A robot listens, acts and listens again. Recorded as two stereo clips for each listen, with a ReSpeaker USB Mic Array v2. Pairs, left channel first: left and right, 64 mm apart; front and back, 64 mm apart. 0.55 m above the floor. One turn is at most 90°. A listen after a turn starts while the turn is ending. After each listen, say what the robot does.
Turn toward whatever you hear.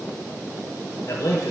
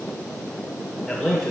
Turn 85° left.
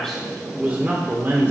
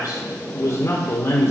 Turn 40° right.
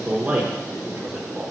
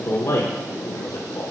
Keep listening.
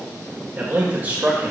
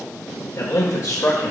Turn 50° right.
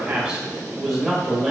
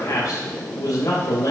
Turn 20° right.
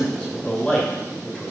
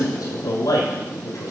Facing the man speaking.